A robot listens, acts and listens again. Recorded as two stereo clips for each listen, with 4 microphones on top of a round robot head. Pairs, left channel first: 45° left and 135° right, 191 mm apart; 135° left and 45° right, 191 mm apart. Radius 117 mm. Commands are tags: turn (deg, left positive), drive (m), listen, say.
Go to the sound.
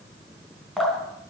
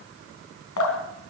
<turn deg="135"/>
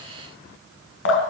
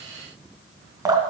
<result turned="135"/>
<turn deg="25"/>
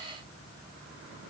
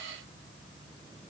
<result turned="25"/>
<listen/>
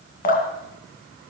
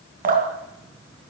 <drive m="1.0"/>
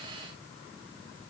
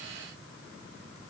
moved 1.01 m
<listen/>
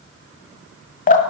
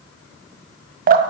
<drive m="1.0"/>
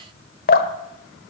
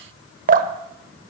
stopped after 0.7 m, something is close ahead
<say>Arrived at the dripping, straight ahead.</say>